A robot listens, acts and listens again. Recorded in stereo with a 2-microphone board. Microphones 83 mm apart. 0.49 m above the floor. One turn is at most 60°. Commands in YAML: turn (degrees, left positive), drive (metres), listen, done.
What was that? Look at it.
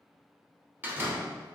turn: -25
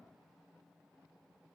listen: true
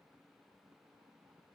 done: "I heard a door slam, but can't make it out now. It was about straight ahead or 130° right."